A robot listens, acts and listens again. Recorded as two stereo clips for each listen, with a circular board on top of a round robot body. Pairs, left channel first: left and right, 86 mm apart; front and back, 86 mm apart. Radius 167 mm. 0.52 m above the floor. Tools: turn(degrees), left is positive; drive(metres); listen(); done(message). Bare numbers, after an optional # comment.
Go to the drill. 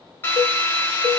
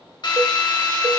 # The drill: 25° left.
turn(25)
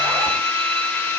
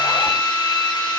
# The drill is now 15° left.
turn(15)
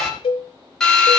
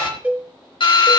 drive(1.0)
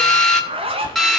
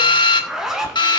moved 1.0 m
drive(1.0)
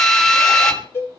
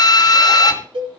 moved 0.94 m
drive(1.0)
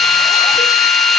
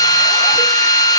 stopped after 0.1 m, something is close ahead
done("I am next to the drill.")